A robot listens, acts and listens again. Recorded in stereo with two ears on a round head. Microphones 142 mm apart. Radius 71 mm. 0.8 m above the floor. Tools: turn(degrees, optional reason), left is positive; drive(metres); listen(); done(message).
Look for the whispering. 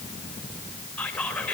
turn(degrees=30)
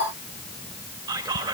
turn(degrees=-25, reason="So it is at 25° right.")
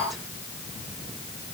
listen()
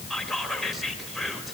done("Facing the whispering.")